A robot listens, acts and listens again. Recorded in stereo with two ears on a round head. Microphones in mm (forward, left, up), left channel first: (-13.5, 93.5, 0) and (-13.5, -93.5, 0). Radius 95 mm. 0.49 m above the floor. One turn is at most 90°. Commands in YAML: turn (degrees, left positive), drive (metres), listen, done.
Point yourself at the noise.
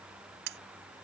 turn: -65
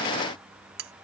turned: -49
turn: -65
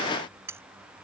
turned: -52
turn: -15
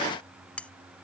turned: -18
done: "Facing the cutlery clinking."